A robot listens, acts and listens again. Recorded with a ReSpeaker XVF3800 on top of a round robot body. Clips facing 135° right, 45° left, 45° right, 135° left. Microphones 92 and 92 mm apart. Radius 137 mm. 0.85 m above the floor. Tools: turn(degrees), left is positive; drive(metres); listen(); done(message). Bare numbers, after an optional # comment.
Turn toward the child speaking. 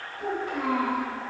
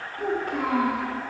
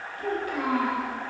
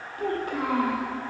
# The child speaking: 80° left.
turn(80)
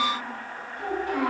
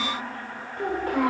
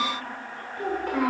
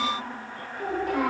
done("Found it: a child speaking, straight ahead.")